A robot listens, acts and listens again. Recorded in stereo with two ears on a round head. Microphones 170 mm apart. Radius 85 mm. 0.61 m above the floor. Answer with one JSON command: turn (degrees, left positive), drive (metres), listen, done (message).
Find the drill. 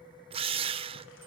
{"turn": -30}
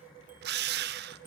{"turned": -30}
{"turn": -120}
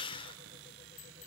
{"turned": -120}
{"turn": 25}
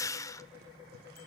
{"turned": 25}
{"turn": 15}
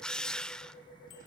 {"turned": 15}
{"done": "Facing the drill, under 1 m away."}